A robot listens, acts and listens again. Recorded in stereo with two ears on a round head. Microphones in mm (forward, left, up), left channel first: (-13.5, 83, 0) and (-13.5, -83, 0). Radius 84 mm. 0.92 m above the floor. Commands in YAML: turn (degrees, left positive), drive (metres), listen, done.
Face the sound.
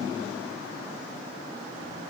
listen: true
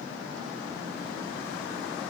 listen: true
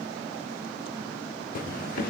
turn: 50
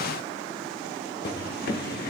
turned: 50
turn: 65
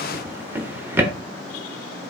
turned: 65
turn: -15
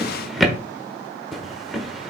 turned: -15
done: "Facing the drawer."